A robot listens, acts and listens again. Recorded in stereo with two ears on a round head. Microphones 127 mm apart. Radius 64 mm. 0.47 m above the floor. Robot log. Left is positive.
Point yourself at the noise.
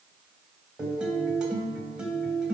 cmd yaw -30
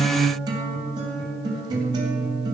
note: So it is at 145° right.
cmd yaw -145
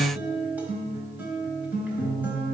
note: The guitar is now 15° right.
cmd yaw -15
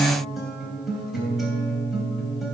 end: Facing the guitar.